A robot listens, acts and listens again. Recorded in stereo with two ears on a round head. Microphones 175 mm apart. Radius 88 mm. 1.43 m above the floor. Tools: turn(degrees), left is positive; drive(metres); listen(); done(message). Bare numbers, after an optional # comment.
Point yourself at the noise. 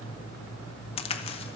# The crack: about 30° left or 150° left.
turn(30)
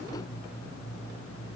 listen()
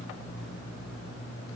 done("I heard a crack, but can't make it out now. It was about straight ahead or 120° left.")